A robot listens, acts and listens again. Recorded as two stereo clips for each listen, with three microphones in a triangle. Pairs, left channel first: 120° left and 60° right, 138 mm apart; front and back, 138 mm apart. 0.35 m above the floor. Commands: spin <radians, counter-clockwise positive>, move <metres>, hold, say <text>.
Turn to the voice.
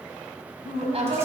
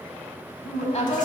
spin -0.44
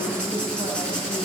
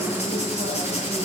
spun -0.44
say Facing the woman speaking, 2 to 4 m away.